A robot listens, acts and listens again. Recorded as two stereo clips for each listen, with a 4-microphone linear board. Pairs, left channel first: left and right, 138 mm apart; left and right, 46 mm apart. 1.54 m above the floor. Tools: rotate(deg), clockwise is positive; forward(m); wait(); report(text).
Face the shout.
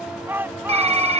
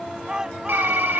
rotate(30)
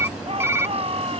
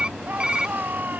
rotate(135)
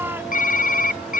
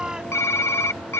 rotate(15)
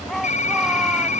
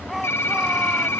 report("Found it: a shout, straight ahead.")